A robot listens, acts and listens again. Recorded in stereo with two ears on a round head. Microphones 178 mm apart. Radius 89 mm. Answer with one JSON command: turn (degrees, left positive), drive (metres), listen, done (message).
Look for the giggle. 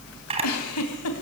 {"turn": 90}
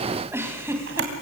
{"turn": -10}
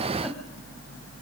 {"listen": true}
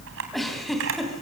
{"done": "Facing the giggle."}